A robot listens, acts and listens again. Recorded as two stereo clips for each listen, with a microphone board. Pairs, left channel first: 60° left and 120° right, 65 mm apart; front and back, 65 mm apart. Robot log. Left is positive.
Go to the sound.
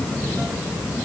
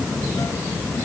cmd idle
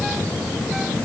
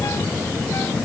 cmd idle
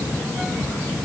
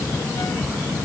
end: I can't make out anything.